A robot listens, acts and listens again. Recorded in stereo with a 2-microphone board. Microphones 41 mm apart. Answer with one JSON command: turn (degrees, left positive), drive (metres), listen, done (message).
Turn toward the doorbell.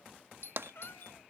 {"turn": 75}
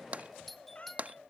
{"done": "Facing the doorbell."}